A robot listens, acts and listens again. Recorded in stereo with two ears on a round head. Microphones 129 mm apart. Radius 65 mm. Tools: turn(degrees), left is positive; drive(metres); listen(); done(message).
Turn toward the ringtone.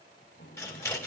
listen()
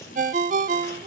turn(degrees=-55)
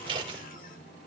listen()
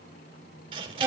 listen()
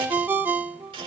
turn(degrees=-15)
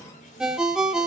done("Facing the ringtone, 1 to 2 m away.")